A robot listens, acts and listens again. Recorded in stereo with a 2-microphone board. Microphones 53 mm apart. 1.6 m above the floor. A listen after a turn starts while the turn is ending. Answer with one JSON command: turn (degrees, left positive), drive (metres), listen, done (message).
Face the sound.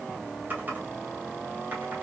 {"turn": -35}
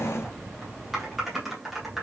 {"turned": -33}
{"done": "Facing the typing on a keyboard, 1 to 2 m away."}